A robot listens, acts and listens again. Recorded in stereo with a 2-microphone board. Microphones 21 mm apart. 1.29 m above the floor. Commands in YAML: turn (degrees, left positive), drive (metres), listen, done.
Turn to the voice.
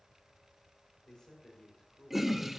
turn: 35
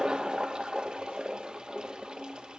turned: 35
listen: true
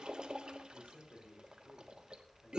turn: 110
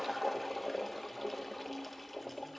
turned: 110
listen: true
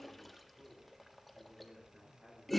turn: -25
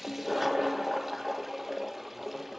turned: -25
listen: true
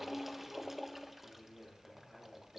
turn: -10
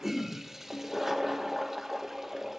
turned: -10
listen: true
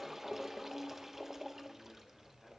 listen: true
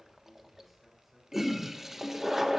done: "I heard a man speaking from this way, but can't make it out now."